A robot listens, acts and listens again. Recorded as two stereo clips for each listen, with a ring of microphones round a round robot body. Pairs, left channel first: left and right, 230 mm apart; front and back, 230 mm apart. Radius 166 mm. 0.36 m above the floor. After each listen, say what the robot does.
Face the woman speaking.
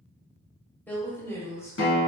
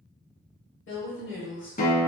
Turn 15° left.
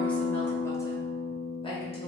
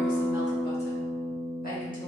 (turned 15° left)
Keep listening.
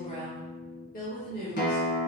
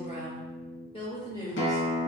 Turn 70° left.
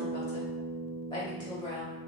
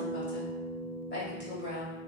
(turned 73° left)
Turn 20° left.
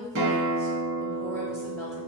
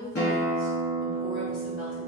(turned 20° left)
Found it: a woman speaking, straight ahead, 1 to 2 m away.